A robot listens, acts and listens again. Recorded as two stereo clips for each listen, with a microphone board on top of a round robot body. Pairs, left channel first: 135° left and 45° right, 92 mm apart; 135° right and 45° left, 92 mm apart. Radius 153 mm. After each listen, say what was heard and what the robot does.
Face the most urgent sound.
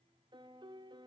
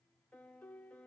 Keep listening.
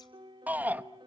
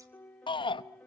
The shout: 115° right. Turn 115° right.
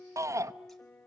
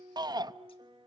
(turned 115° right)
The shout is now 10° left. Turn 10° left.
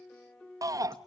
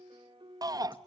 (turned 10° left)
Facing the shout.